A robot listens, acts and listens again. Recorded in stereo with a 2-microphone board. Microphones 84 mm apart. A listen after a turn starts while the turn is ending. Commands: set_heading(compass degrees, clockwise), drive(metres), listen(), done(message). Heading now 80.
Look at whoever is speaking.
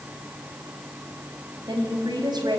set_heading(135)
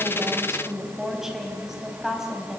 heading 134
done("Found it: a woman speaking, straight ahead.")